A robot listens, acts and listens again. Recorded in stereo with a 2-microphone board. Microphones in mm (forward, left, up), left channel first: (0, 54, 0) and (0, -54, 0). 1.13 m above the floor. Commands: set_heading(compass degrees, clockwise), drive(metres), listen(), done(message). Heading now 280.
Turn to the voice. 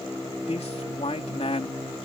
set_heading(210)
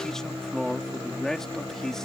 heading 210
done("Facing the man speaking.")